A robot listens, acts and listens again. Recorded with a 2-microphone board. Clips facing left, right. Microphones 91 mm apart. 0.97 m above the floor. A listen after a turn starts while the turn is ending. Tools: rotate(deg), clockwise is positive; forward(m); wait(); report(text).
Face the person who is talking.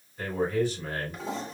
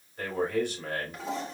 rotate(60)
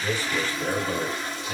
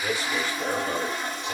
rotate(55)
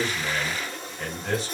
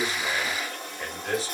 report("Found it: a man speaking, straight ahead.")